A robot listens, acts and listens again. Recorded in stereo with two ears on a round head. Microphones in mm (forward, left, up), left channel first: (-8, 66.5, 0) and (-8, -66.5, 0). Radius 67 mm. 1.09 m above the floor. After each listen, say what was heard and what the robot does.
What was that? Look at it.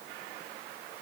Keep listening.
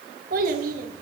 The child speaking: about 65° right or 115° right. Turn 65° right.
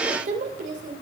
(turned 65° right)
So it is at 55° right. Turn 55° right.
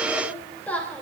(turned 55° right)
The child speaking is now 10° left. Turn 10° left.
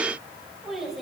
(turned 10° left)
Facing the child speaking.